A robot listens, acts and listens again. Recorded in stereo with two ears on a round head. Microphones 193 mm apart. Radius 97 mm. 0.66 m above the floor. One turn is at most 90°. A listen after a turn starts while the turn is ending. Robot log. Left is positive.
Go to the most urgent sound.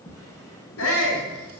cmd yaw +90
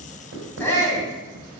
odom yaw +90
note: So it is at 10° left.
cmd yaw +10
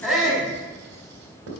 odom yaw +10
cmd fwd 1.0
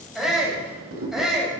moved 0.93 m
cmd fwd 1.0
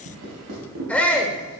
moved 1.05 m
cmd fwd 1.0
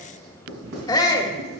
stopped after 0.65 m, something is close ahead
note: The shout is now 20° left.
cmd yaw +20
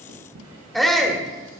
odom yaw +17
end: Arrived at the shout, straight ahead.